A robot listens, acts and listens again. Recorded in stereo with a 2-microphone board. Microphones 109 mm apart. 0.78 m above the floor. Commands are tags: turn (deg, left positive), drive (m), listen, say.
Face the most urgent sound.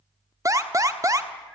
<turn deg="-30"/>
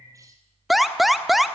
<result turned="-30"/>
<say>Facing the alarm.</say>